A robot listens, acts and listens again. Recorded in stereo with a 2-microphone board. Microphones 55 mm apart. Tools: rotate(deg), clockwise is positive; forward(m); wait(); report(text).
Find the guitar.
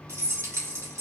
wait()
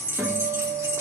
rotate(45)
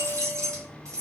wait()
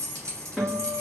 report("Facing the guitar, 1 to 2 m away.")